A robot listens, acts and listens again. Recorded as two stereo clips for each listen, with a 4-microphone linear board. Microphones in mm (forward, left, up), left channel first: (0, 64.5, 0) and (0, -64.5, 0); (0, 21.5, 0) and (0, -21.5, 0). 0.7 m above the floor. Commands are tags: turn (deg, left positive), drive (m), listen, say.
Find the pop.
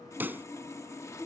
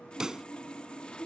<turn deg="-30"/>
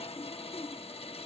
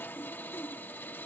<listen/>
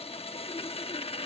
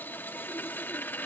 <say>I heard a pop, but can't make it out now. It was about 15° left or 135° right.</say>